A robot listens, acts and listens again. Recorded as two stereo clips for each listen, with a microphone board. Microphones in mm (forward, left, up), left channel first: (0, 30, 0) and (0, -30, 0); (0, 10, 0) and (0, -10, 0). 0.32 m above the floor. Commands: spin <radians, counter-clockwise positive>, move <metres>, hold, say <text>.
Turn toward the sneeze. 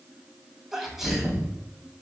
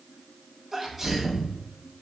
spin -0.52
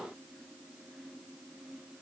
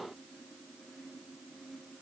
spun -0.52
hold
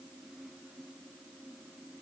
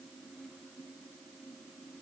say I heard a sneeze, but can't make it out now. It was about 25° left or 145° right.